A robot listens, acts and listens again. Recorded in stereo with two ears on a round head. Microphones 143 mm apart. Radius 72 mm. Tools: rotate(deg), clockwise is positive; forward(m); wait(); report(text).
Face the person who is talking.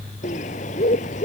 wait()
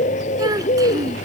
rotate(25)
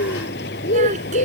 wait()
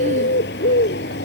wait()
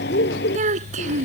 rotate(130)
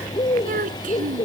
rotate(50)
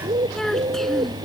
report("Found it: a child speaking, straight ahead.")